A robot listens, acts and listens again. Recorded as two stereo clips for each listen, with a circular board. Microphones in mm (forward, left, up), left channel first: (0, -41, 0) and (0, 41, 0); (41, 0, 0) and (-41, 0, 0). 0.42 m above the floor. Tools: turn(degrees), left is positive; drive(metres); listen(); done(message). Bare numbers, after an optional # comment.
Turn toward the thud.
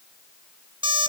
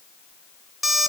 listen()
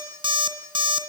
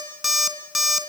listen()
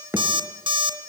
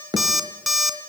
# The thud: 150° left.
turn(150)
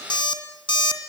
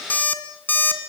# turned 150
done("I heard a thud from this way, but can't make it out now.")